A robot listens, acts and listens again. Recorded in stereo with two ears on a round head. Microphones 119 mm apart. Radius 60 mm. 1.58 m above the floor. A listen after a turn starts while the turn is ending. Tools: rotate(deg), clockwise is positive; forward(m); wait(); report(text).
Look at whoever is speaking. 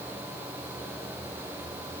wait()
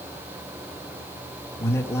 rotate(-20)
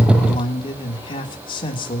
rotate(-140)
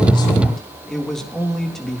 report("Found it: a man speaking, straight ahead, 2 to 4 m away.")